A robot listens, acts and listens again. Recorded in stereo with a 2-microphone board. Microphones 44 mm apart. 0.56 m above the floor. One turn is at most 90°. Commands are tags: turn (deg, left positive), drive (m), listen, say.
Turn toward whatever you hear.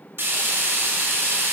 <turn deg="-60"/>
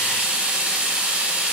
<turn deg="-25"/>
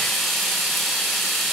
<say>Found it: frying, straight ahead, 1 to 2 m away.</say>